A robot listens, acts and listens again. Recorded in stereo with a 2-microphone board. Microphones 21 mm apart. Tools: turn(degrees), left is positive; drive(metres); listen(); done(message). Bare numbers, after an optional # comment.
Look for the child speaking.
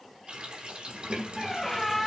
turn(-30)
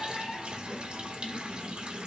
# So it is at 140° right.
turn(-140)
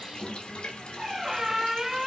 # The child speaking is now 15° left.
turn(15)
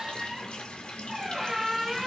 listen()
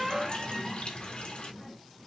done("Facing the child speaking, 1 to 2 m away.")